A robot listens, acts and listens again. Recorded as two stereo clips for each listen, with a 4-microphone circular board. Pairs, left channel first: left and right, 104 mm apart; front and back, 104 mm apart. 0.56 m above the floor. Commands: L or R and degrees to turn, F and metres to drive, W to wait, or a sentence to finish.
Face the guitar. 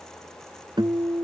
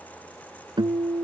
R135
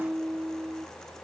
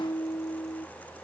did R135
R20
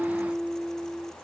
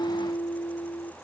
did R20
Facing the guitar.